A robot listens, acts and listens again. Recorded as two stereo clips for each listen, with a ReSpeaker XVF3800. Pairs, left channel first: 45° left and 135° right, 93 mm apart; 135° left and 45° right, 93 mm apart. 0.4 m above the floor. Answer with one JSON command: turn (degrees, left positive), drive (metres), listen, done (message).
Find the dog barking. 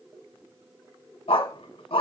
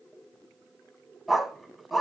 {"turn": 45}
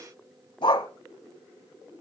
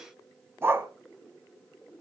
{"turn": 20}
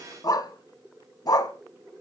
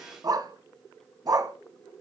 {"done": "Found it: a dog barking, straight ahead, 1 to 2 m away."}